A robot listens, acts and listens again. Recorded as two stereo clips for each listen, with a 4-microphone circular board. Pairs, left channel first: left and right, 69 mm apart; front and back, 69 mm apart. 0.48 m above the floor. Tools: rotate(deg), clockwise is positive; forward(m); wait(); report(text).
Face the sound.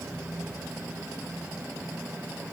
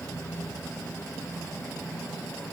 wait()
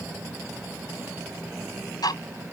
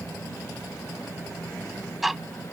rotate(-90)
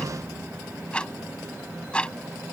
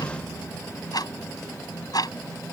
rotate(-15)
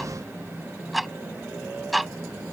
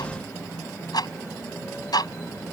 report("Facing the ticking.")